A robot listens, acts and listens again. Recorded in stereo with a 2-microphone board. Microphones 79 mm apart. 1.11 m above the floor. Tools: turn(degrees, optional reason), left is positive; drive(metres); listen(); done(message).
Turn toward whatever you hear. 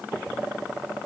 listen()
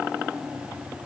listen()
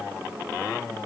done("I can't make out anything to turn to.")